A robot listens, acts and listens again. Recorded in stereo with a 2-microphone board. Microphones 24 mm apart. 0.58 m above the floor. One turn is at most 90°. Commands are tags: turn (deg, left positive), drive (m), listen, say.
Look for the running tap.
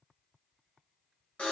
<listen/>
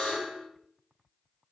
<listen/>
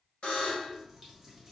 <turn deg="-30"/>
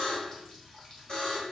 <turn deg="25"/>
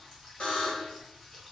<turn deg="10"/>
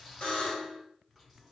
<say>Found it: a running tap, straight ahead.</say>